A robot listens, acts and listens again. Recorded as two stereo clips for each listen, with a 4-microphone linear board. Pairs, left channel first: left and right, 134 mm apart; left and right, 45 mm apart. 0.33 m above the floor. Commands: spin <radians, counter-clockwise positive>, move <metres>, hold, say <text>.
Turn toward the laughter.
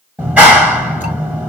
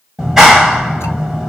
hold
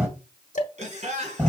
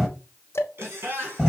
spin -0.96
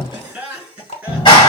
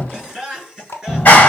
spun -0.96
say Found it: laughter, straight ahead.